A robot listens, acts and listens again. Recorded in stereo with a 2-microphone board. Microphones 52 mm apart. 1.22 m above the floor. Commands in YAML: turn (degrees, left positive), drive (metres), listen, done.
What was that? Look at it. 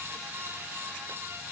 listen: true
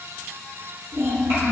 turn: -60
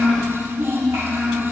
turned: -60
turn: -70
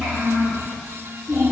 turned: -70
turn: -20
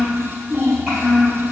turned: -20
done: "Found it: a child speaking, straight ahead, 2 to 4 m away."